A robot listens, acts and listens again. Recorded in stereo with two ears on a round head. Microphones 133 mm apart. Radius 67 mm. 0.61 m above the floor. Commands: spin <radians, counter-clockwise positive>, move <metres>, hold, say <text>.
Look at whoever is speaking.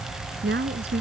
spin -1.57
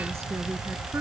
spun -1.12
spin -0.44
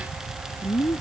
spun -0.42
spin 0.17
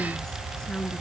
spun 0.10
say Found it: a woman speaking, straight ahead.